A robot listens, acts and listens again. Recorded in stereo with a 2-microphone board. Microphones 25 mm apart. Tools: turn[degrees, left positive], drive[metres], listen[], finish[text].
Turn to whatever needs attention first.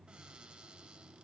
Action: listen[]
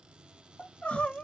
Action: turn[90]
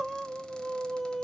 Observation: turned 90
Thought: So it is at 10° left.
Action: turn[10]
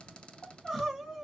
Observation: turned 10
Action: finish[Facing the crying.]